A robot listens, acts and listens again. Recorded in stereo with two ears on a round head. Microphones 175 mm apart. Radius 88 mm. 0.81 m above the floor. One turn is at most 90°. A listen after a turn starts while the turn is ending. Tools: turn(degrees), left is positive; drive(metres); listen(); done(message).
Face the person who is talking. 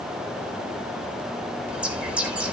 listen()
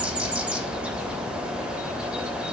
listen()
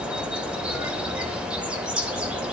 done("I can't make out anyone speaking, only a bird.")